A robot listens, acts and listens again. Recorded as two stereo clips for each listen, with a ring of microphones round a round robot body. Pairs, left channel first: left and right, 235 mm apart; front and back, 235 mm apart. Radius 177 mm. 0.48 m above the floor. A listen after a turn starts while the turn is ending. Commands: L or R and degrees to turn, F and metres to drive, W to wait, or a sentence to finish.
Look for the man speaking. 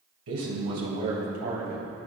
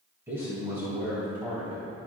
R95
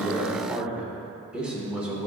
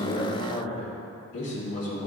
Found it: a man speaking, straight ahead.